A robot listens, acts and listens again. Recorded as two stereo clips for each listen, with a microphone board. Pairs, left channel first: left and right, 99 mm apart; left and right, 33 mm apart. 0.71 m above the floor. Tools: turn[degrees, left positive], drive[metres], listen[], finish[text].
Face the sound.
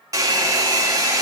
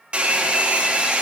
Thought: The hair dryer: about 35° right or 145° right.
Action: turn[-35]
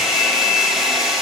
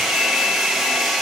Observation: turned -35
Action: finish[Found it: a hair dryer, straight ahead, 1 to 2 m away.]